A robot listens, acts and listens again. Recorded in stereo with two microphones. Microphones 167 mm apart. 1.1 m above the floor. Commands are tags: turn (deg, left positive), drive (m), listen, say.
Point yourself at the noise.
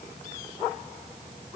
<listen/>
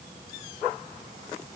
<listen/>
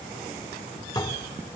<turn deg="25"/>
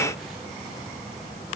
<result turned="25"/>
<listen/>
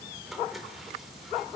<say>Facing the dishes clattering, 2 to 4 m away.</say>